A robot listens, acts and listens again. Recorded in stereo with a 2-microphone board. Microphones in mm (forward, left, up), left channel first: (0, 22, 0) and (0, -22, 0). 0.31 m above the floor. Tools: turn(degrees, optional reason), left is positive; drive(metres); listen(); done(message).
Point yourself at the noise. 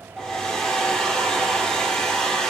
turn(degrees=30)
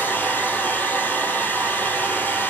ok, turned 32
turn(degrees=135, reason="So it is at 135° left.")
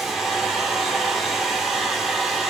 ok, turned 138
done("Found it: a hair dryer, straight ahead.")